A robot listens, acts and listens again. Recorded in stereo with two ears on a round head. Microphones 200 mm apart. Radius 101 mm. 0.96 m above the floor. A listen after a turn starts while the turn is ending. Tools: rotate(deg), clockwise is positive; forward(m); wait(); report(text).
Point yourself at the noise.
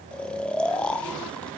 rotate(-30)
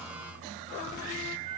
wait()
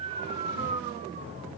rotate(25)
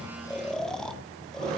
report("Found it: snoring, straight ahead, 1 to 2 m away.")